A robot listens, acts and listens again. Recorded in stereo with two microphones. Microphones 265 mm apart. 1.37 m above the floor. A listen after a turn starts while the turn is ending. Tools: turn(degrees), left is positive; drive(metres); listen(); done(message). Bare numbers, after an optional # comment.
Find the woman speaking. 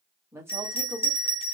turn(-30)
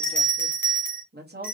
# So it is at 140° right.
turn(-140)
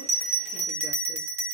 listen()
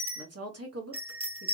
# The woman speaking is now 65° right.
turn(-65)
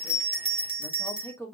# The woman speaking is now 10° left.
turn(10)
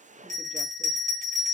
listen()
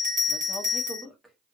done("Facing the woman speaking.")